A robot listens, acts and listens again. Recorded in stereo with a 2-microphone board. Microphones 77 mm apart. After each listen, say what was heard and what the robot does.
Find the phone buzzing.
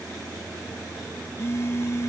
The phone buzzing: about 35° left or 145° left. Turn 35° left.
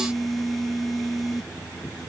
Found it: a phone buzzing, straight ahead.